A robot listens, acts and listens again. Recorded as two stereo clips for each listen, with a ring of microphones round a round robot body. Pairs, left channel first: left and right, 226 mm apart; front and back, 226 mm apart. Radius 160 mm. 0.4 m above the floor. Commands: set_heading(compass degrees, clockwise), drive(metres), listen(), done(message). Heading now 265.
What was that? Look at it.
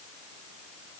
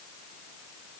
listen()
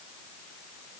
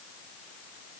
listen()
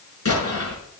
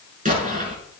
set_heading(140)
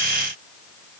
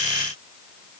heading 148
set_heading(138)
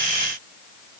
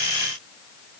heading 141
done("I heard an explosion from this way, but can't make it out now.")